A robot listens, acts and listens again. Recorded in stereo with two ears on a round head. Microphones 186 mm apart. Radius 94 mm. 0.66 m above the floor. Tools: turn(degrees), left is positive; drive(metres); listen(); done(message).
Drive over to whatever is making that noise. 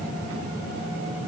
listen()
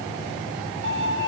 turn(degrees=-60)
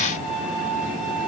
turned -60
drive(metres=1.0)
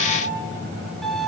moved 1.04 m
drive(metres=1.0)
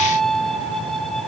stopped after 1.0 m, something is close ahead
done("I am next to the violin.")